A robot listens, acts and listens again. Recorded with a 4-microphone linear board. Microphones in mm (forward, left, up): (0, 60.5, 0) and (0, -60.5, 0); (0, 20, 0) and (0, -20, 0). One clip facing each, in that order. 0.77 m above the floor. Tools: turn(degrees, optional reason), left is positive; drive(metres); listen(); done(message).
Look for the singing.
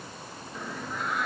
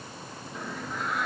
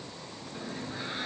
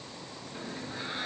turn(degrees=30)
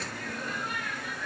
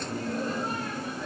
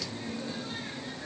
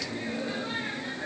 turn(degrees=-30, reason="So it is at 30° right.")
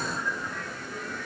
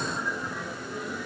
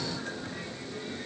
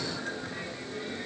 turn(degrees=-10, reason="The singing is now 10° right.")
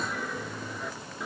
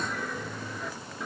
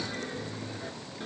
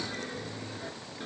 done("Found it: singing, straight ahead.")